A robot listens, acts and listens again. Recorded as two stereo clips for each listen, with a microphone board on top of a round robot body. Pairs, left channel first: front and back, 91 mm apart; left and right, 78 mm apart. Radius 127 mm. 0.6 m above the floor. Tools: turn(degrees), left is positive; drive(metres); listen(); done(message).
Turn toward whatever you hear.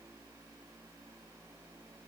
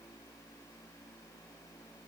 listen()
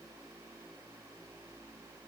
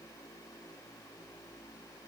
listen()
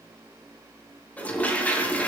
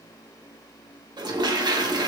turn(degrees=-75)
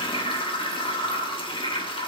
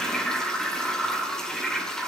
turn(degrees=10)
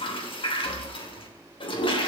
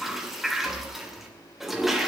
done("Found it: a toilet flushing, straight ahead.")